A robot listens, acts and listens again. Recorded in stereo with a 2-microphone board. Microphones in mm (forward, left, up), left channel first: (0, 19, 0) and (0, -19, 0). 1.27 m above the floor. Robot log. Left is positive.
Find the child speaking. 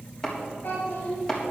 note: The child speaking: about 55° left or 125° left.
cmd yaw +55
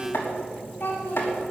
note: So it is at 55° left.
cmd yaw +55
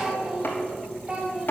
note: The child speaking is now 30° right.
cmd yaw -30
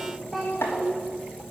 note: The child speaking is now 10° right.
cmd yaw -10
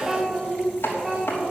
note: The child speaking is now 10° right.
cmd yaw -10
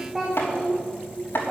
end: Found it: a child speaking, straight ahead, 1 to 2 m away.